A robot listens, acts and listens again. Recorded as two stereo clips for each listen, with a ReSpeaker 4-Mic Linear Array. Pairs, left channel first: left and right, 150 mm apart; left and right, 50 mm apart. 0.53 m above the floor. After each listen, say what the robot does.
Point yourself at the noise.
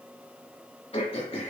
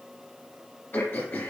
Turn 40° left.
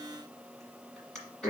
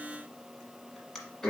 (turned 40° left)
Facing the throat clearing, 1 to 2 m away.